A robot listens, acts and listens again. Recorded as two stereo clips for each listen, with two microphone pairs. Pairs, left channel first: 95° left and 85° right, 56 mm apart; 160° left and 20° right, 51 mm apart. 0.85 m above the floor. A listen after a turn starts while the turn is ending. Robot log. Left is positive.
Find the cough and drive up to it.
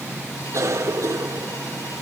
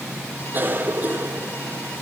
note: The cough: 65° right.
cmd yaw -65
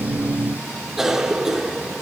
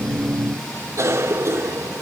cmd fwd 1.0
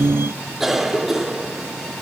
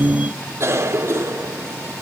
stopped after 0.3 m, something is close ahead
end: Blocked. The cough is further on, straight ahead.